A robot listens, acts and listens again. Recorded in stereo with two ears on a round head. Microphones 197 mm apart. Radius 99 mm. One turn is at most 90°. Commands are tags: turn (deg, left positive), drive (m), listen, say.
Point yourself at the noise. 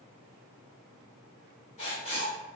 <turn deg="30"/>
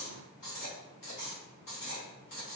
<turn deg="90"/>
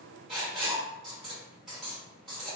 <say>Found it: writing, straight ahead.</say>